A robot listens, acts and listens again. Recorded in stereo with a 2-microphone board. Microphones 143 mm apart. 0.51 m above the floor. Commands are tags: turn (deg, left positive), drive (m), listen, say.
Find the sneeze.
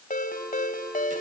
<listen/>
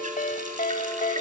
<listen/>
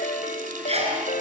<turn deg="-45"/>
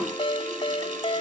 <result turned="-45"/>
<listen/>
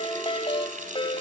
<say>I heard a sneeze, but can't make it out now. It was about straight ahead or 90° right.</say>